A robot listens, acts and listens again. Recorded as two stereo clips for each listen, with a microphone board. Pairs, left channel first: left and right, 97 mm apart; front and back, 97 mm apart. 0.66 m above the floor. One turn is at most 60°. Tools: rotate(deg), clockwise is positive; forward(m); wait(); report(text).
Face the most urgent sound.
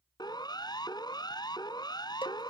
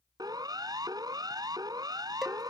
rotate(-60)
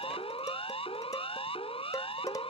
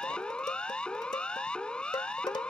rotate(-60)
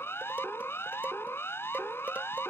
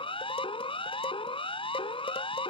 rotate(-25)
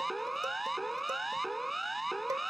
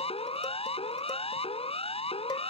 report("Found it: a siren, straight ahead.")